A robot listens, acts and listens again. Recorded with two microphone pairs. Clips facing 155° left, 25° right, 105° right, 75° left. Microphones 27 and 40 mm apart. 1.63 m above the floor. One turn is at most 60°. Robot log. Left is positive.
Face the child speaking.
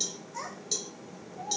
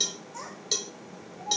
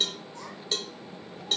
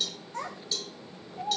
note: The child speaking: 85° left.
cmd yaw +60
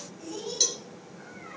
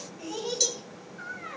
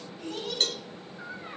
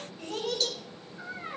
note: The child speaking is now 25° left.
cmd yaw +25
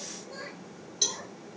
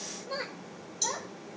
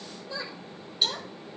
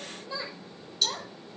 end: Facing the child speaking, over 4 m away.